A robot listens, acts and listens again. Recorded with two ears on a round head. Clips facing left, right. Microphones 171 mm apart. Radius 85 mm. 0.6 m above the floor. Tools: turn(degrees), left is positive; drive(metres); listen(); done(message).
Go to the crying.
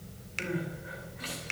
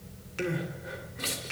turn(degrees=-55)
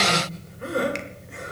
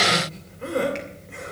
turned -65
drive(metres=1.0)
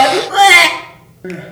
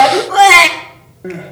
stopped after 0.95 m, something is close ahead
turn(degrees=10)
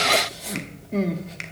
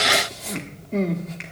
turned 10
done("I am next to the crying.")